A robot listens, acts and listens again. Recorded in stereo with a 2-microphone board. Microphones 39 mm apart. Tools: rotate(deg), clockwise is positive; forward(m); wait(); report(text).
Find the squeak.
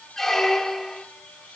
rotate(-30)
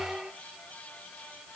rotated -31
rotate(25)
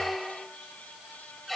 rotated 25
report("Found it: a squeak, straight ahead, under 1 m away.")